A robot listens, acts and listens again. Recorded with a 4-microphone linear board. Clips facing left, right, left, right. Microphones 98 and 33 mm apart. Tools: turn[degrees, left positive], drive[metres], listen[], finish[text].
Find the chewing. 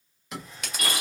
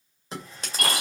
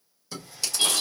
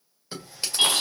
Thought: The chewing: about 30° right or 150° right.
Action: turn[-30]
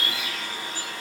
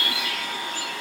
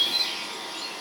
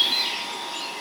Action: listen[]
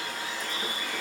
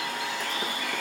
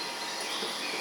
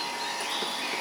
Action: listen[]
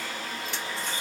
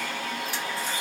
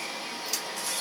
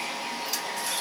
Action: finish[I heard chewing, but can't make it out now. It was about straight ahead or 120° right.]